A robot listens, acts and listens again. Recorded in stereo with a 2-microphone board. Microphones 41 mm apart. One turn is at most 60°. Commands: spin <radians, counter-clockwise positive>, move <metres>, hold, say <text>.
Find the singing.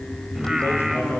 spin -0.52
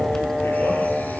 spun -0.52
spin -0.52
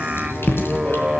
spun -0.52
spin -1.05
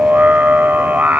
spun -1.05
spin -1.05
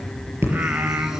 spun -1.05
spin -0.96
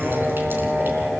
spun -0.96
spin -0.26
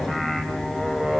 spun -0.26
say Facing the singing, 2 to 4 m away.